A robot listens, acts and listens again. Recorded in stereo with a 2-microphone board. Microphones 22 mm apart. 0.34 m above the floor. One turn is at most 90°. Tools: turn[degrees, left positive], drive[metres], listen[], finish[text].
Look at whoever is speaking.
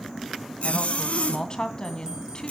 Thought: The woman speaking: about 35° left or 145° left.
Action: turn[35]
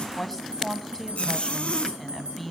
Action: finish[Facing the woman speaking.]